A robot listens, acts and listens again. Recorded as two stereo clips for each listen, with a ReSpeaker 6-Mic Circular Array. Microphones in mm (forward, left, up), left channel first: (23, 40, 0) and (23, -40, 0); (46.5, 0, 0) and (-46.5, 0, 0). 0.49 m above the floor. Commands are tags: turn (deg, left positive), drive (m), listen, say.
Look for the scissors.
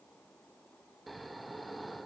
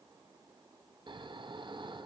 <listen/>
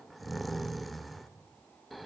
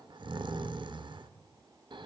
<listen/>
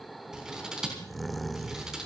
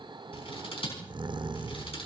<turn deg="-10"/>
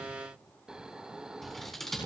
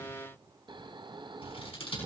<say>Found it: scissors, straight ahead, over 4 m away.</say>